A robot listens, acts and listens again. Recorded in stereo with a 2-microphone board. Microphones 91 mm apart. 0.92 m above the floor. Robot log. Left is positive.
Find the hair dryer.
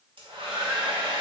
cmd yaw -90
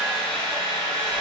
note: So it is at 10° left.
cmd yaw +10
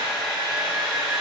end: Facing the hair dryer.